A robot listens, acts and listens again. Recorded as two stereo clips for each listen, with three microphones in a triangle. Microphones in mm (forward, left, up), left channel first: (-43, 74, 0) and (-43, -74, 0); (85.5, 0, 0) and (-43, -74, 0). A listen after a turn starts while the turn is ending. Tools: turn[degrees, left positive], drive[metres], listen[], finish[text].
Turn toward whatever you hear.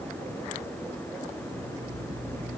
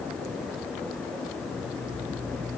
Thought: The alarm clock: 140° right.
Action: turn[-140]
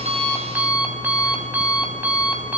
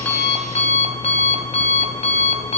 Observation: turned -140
Thought: The alarm clock is now 10° right.
Action: turn[-10]
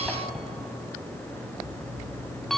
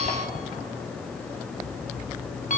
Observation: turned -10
Action: finish[Found it: an alarm clock, straight ahead.]